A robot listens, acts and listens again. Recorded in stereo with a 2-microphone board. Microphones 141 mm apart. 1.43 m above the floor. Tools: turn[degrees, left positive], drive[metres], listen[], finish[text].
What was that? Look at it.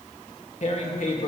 Thought: The tearing paper: about 55° left or 125° left.
Action: turn[55]
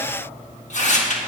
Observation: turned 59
Thought: So it is at 60° left.
Action: turn[60]
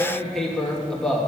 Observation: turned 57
Action: finish[Facing the tearing paper, 1 to 2 m away.]